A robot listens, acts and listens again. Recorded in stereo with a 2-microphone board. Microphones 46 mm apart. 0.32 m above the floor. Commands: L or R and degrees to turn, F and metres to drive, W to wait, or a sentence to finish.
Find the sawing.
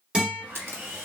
R75
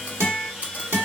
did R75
Found it: sawing, straight ahead.